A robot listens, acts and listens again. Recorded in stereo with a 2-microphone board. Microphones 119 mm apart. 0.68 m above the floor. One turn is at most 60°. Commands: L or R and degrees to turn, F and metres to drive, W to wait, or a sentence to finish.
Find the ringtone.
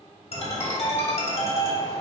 L55
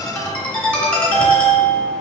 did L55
L10
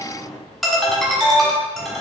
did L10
Facing the ringtone.